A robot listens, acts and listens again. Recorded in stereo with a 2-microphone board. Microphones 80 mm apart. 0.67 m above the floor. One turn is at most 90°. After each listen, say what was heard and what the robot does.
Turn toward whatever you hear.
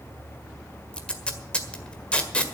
Turn 30° left.
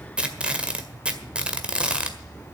So it is at 15° right. Turn 15° right.
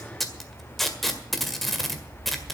Facing the tape being pulled, 1 to 2 m away.